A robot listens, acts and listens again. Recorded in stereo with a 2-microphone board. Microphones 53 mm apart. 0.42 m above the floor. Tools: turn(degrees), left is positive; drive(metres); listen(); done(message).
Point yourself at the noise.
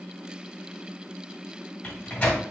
turn(degrees=25)
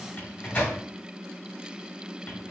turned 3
turn(degrees=30)
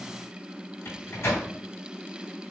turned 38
turn(degrees=110)
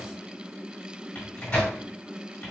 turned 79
turn(degrees=30)
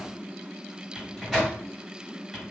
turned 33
done("Facing the microwave.")